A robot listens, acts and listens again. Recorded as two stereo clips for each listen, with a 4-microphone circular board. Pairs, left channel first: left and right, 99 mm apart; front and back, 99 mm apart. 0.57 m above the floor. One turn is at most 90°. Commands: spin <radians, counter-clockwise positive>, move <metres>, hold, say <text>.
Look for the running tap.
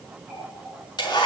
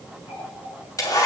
say Facing the running tap, over 4 m away.